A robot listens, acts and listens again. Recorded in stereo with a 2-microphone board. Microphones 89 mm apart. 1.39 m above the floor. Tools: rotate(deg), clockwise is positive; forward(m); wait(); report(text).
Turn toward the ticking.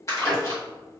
rotate(-25)
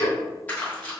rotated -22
rotate(-130)
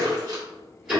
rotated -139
rotate(10)
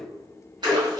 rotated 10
report("Facing the ticking, 1 to 2 m away.")